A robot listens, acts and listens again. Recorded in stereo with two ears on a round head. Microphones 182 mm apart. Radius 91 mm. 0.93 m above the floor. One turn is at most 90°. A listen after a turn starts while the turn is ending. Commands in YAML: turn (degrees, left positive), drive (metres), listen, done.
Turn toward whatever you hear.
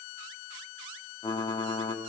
turn: 20
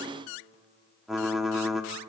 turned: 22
done: "Found it: typing on a keyboard, straight ahead, 1 to 2 m away."